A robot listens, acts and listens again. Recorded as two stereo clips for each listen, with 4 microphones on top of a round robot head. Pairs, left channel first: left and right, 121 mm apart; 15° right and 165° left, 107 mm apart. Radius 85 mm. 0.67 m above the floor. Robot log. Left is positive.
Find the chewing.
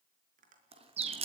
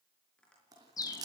note: The chewing: 130° right.
cmd yaw -130
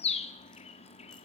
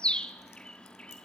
cmd idle
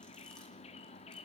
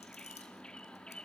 cmd idle
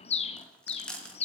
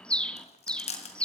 end: Found it: chewing, straight ahead, 2 to 4 m away.